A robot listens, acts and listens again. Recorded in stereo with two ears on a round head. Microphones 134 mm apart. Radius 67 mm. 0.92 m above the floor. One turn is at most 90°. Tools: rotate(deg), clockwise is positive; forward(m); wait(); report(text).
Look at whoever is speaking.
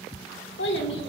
rotate(-90)
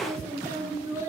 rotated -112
rotate(20)
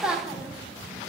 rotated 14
report("Facing the child speaking, 1 to 2 m away.")